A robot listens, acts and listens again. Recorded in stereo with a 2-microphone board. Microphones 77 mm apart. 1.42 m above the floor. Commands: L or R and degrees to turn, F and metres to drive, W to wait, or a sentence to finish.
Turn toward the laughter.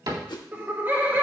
R25
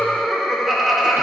Facing the laughter, 1 to 2 m away.